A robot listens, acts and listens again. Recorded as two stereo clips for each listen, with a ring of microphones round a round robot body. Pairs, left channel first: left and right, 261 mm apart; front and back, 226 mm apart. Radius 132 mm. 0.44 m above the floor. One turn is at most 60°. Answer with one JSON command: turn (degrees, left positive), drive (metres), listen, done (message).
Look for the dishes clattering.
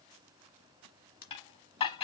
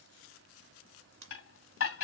{"turn": 20}
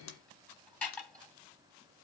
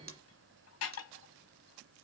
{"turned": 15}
{"done": "Facing the dishes clattering, 2 to 4 m away."}